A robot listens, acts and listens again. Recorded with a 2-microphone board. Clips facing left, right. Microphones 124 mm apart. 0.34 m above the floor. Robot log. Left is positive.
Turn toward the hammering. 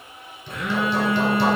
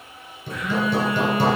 note: The hammering: about 45° right or 135° right.
cmd yaw -45
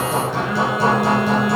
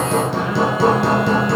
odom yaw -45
note: So it is at 90° right.
cmd yaw -90
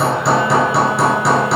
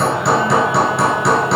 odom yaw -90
end: Facing the hammering.